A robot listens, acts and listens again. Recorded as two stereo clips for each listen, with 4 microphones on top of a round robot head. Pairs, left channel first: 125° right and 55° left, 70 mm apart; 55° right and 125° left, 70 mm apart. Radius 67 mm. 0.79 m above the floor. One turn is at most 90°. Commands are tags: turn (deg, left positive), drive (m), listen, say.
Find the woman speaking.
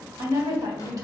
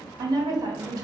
<turn deg="90"/>
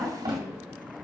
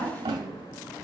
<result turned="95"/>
<turn deg="-10"/>
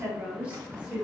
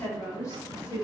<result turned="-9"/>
<turn deg="-20"/>
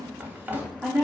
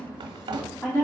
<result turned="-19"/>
<turn deg="-10"/>
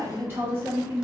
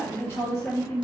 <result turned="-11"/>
<say>Found it: a woman speaking, straight ahead, 2 to 4 m away.</say>